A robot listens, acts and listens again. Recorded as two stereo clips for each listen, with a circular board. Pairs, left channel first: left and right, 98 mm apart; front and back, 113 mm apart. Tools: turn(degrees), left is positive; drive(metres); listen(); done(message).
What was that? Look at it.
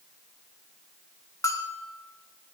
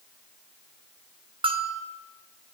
turn(degrees=145)
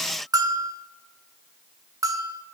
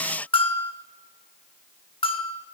turn(degrees=-35)
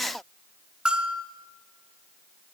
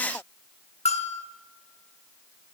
turn(degrees=-10)
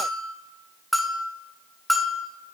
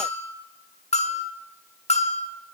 done("Found it: a bell, straight ahead, 1 to 2 m away.")